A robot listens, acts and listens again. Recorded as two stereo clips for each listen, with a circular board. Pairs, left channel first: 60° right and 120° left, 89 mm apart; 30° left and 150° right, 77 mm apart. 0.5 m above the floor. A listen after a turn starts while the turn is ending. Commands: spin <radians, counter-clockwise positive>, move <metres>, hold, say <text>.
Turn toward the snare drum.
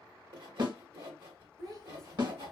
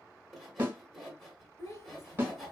spin 2.62
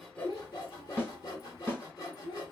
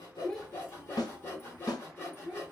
say Found it: a snare drum, straight ahead.